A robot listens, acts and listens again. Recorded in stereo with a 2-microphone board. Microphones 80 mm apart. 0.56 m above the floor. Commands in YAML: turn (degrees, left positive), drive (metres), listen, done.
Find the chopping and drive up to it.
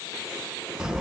listen: true
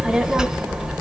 listen: true
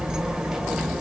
done: "I can't make out chopping, only a child speaking."